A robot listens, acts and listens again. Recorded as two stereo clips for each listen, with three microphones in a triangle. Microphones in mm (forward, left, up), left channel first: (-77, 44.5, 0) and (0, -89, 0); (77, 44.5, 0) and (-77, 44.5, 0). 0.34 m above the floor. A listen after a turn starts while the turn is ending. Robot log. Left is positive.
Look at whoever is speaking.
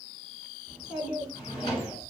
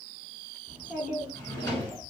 note: The child speaking: 25° left.
cmd yaw +25
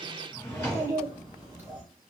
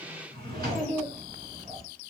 note: The child speaking is now 15° left.
cmd yaw +15
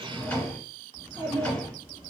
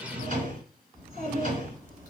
end: Facing the child speaking, 2 to 4 m away.